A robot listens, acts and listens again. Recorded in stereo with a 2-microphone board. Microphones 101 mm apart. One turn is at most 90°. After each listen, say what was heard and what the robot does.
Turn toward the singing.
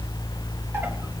Keep listening.
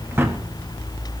Keep listening.
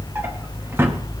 I can't make out singing, only a drawer.